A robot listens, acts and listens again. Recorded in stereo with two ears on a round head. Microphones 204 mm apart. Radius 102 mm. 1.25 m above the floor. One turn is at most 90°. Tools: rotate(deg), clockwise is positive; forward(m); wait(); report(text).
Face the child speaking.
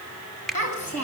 rotate(-35)
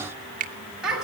report("Facing the child speaking.")